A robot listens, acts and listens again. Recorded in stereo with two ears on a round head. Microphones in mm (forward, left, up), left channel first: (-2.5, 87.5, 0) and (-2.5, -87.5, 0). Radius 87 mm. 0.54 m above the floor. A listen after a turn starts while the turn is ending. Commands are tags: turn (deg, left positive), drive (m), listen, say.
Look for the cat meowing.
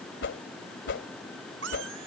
<turn deg="-70"/>
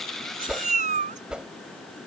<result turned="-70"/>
<turn deg="-40"/>
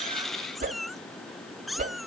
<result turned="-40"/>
<say>Found it: a cat meowing, straight ahead.</say>